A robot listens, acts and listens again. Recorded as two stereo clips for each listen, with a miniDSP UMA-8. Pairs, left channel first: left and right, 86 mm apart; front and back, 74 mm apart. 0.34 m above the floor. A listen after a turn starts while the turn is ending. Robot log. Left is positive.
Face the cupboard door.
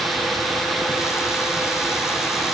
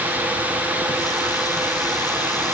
cmd idle
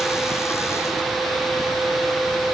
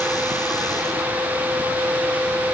cmd idle
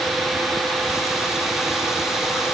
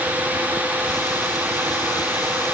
end: I can't make out a cupboard door.